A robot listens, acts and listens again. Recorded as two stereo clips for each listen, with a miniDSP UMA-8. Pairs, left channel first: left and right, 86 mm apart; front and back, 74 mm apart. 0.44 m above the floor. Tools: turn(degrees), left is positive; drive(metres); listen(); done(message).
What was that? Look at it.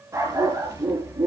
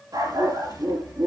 turn(degrees=-150)
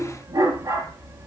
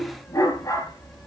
turn(degrees=-45)
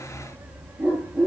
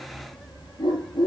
turn(degrees=-15)
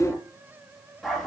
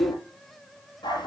done("Found it: a dog barking, straight ahead.")